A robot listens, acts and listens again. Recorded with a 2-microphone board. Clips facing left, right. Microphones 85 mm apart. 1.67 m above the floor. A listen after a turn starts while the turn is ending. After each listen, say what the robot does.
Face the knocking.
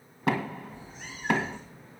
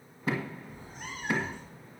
Turn 70° left.
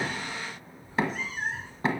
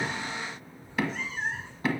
Turn 35° left.
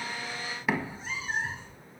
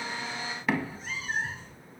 Turn 10° left.
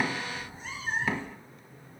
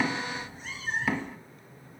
Found it: knocking, straight ahead.